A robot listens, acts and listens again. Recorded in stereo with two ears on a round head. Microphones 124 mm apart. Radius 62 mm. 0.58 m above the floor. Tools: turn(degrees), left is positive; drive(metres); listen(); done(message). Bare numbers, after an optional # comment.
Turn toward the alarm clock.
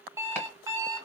# The alarm clock: about 20° right or 160° right.
turn(-20)
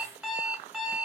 done("Found it: an alarm clock, straight ahead, under 1 m away.")